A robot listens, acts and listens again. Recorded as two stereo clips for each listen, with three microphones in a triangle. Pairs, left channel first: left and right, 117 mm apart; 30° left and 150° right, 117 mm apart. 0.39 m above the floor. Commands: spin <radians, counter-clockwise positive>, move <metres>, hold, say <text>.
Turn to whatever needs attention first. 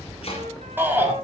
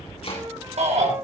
spin -2.79
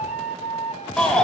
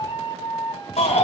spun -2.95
spin 0.17
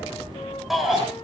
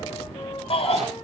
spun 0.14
say Facing the shout.